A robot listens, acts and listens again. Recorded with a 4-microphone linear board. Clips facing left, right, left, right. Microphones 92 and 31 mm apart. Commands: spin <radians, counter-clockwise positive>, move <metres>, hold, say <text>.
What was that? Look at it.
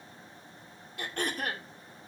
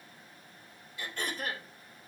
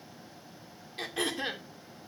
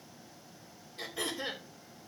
spin 1.05
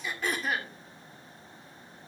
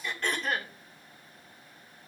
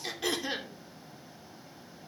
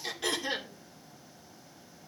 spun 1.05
say Facing the throat clearing, 2 to 4 m away.